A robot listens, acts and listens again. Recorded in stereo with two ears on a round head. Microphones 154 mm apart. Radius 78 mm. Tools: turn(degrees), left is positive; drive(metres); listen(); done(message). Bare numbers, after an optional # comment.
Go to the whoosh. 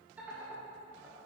listen()
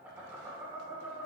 listen()
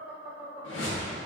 turn(90)
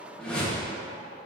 drive(1.0)
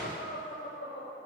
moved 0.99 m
listen()
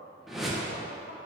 drive(1.0)
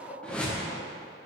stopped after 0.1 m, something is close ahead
done("I am next to the whoosh.")